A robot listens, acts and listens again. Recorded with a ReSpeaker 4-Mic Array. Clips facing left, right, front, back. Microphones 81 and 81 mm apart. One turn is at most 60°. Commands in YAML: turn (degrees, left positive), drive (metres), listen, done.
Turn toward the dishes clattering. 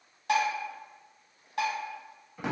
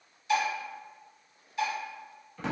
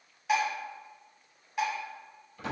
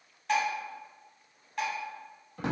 turn: 60
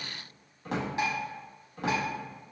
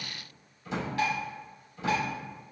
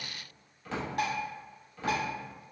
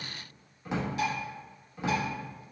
turn: 25
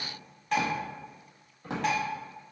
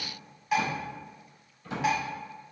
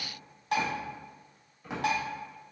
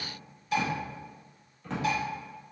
done: "Found it: dishes clattering, straight ahead, 1 to 2 m away."